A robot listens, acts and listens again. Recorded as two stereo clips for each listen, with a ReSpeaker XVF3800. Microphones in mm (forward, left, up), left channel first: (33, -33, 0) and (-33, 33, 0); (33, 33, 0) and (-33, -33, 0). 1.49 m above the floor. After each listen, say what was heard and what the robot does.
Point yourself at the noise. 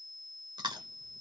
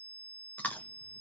The chewing: 115° left. Turn 115° left.
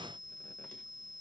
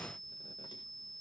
Keep listening.
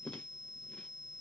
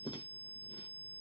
The chewing is now 35° left. Turn 35° left.
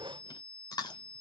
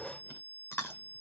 The chewing is now 15° right. Turn 15° right.
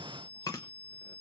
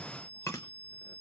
Facing the chewing.